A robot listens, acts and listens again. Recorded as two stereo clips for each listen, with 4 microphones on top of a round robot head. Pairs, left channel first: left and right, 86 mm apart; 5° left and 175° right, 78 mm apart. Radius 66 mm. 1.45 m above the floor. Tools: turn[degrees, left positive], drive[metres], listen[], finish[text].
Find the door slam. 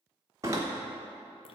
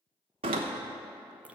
Thought: The door slam: 155° right.
Action: turn[-155]
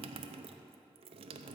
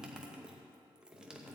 Action: finish[I heard a door slam from this way, but can't make it out now.]